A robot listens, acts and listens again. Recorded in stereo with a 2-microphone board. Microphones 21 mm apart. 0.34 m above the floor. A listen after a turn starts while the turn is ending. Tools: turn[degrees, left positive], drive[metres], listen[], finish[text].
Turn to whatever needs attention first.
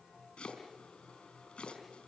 Action: listen[]
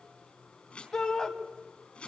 Thought: The shout: about 35° left or 145° left.
Action: turn[35]
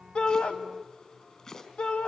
Thought: So it is at 100° left.
Action: turn[100]
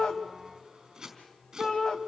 Thought: The shout is now 40° left.
Action: turn[40]
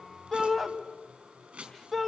Action: finish[Found it: a shout, straight ahead.]